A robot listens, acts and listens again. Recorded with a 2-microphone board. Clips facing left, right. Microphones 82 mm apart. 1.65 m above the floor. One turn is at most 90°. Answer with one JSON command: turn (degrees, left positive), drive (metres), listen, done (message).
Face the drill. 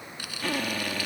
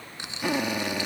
{"turn": -15}
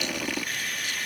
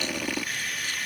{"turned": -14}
{"done": "Facing the drill."}